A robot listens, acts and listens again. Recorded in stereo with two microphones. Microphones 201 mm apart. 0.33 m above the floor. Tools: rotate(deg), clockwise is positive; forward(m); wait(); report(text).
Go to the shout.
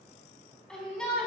rotate(-30)
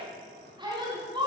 rotate(25)
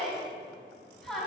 forward(1.0)
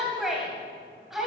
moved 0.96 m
forward(1.0)
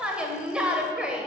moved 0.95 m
rotate(10)
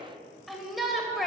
forward(1.0)
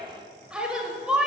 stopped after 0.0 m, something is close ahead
report("I am next to the shout.")